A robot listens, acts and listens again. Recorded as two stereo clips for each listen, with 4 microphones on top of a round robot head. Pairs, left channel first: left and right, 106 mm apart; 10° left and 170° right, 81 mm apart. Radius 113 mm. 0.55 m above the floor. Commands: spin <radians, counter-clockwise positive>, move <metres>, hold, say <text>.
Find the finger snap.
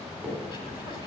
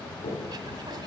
spin -0.17
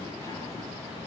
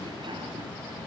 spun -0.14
hold
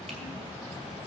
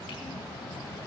hold
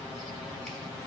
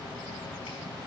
say I heard a finger snap from this way, but can't make it out now.